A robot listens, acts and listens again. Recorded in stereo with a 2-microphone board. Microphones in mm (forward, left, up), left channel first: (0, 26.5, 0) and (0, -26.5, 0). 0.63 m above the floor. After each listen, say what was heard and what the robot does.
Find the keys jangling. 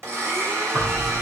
The keys jangling: about 35° right or 145° right. Turn 35° right.
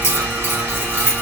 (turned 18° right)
So it is at 125° right. Turn 125° right.
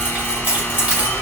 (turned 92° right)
The keys jangling is now 30° right. Turn 30° right.
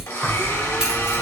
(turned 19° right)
The keys jangling is now 15° right. Turn 15° right.
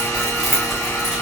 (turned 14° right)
Found it: keys jangling, straight ahead, 2 to 4 m away.